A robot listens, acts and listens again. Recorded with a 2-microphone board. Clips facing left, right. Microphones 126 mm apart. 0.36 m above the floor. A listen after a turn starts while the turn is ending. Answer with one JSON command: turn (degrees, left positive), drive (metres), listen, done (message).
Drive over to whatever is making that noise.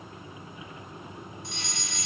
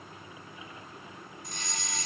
{"turn": -40}
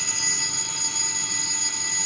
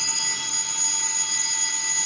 {"drive": 1.0}
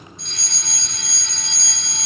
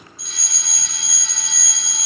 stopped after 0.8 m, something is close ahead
{"done": "Something is in my way. I am facing the fire alarm but have not reached it."}